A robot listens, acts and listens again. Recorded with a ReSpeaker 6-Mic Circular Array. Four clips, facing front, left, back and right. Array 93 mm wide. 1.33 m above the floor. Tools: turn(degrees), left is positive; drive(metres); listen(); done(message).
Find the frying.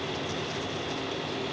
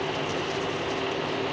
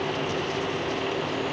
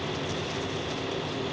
listen()
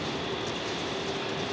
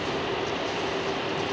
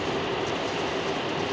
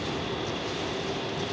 listen()
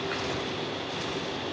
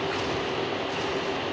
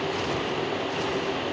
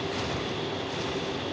done("I can't make out frying.")